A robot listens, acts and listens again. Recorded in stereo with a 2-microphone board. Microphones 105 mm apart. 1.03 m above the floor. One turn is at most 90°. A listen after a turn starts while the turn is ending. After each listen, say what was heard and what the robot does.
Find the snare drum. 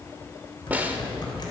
The snare drum: about 15° right or 165° right. Turn 15° right.
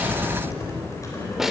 Found it: a snare drum, straight ahead.